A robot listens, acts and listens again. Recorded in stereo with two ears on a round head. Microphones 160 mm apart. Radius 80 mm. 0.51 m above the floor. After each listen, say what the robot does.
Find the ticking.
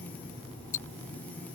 Turn 45° left.
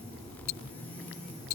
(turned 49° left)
Turn 85° left.
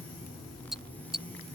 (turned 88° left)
Found it: ticking, straight ahead.